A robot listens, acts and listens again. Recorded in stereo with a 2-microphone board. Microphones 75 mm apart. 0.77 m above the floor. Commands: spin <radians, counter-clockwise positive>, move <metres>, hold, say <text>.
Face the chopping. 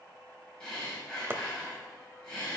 spin -0.52
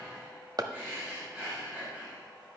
spin -2.09
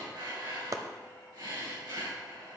spin -0.87
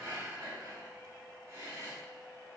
hold
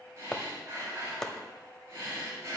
spin 0.17
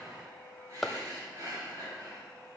say Facing the chopping.